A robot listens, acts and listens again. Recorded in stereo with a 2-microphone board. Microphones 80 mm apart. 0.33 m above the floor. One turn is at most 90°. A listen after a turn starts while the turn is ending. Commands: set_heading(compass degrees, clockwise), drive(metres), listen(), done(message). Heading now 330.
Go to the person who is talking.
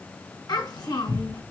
set_heading(275)
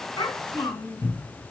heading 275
set_heading(215)
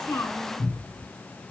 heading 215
listen()
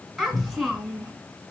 drive(1.0)
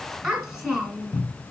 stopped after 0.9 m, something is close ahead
set_heading(230)
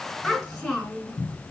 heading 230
done("I am next to the child speaking.")